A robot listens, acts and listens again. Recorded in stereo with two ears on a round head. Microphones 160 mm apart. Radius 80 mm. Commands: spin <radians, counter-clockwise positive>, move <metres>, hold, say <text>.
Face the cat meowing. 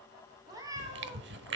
spin -0.35
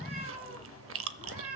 spin -2.36
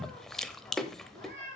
spin -0.79
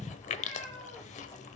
say Facing the cat meowing, over 4 m away.